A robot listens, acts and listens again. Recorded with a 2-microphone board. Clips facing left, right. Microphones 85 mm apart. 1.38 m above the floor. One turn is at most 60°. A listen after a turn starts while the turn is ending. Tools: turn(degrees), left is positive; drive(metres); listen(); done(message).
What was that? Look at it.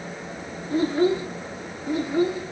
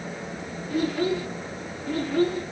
turn(degrees=30)
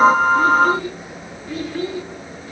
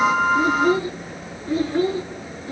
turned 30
turn(degrees=-35)
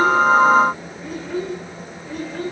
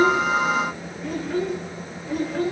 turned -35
done("Facing the child speaking, over 4 m away.")